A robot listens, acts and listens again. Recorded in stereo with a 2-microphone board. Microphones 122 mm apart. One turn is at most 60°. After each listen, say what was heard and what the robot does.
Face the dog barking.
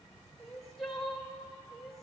Keep listening.
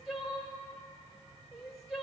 Keep listening.
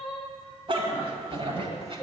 The dog barking: about 50° right or 130° right. Turn 50° right.
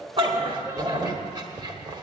So it is at 35° right. Turn 35° right.
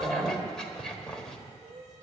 Facing the dog barking, 1 to 2 m away.